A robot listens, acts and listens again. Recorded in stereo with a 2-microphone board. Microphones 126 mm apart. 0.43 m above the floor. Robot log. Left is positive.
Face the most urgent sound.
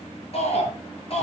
note: The shout: about 50° left or 130° left.
cmd yaw +50
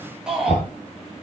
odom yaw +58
end: Found it: a shout, straight ahead.